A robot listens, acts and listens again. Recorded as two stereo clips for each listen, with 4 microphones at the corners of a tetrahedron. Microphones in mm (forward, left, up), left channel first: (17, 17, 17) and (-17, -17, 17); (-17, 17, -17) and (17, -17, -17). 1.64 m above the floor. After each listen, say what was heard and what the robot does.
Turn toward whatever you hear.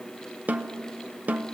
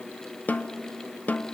The snare drum: straight behind. Turn 180° left.
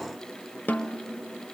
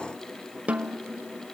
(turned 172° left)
The snare drum is now 10° left. Turn 10° left.
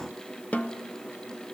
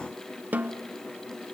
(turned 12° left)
Facing the snare drum.